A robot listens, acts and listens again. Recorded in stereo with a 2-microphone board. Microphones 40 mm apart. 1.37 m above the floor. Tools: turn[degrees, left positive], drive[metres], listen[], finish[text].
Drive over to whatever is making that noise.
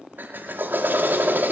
Thought: The drill: about 55° right or 125° right.
Action: turn[-55]
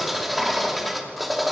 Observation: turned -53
Action: drive[1.0]
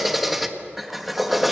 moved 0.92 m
Action: drive[1.0]
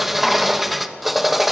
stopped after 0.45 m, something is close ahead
Action: finish[Arrived at the drill, straight ahead.]